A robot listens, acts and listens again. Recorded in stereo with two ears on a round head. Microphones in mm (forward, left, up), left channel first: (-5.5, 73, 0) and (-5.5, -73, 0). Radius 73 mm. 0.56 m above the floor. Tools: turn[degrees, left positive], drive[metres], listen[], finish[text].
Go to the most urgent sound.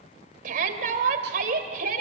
Thought: The shout: about 55° right or 125° right.
Action: turn[-55]
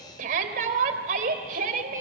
Thought: So it is at 60° right.
Action: turn[-60]
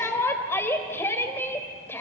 Thought: The shout is now 15° left.
Action: turn[15]
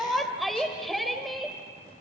Action: drive[1.0]
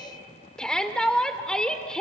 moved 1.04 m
Action: drive[1.0]
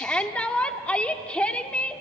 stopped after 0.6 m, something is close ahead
Thought: The shout is now 10° left.
Action: turn[10]
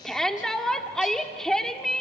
Action: finish[I am next to the shout.]